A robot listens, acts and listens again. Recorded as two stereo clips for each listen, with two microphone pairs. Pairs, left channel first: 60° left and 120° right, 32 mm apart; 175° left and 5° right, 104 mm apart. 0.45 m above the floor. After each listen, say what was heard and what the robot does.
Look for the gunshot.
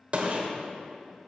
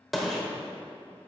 The gunshot: 90° right. Turn 90° right.
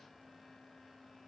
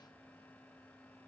Facing where the gunshot came from. I can't hear it now.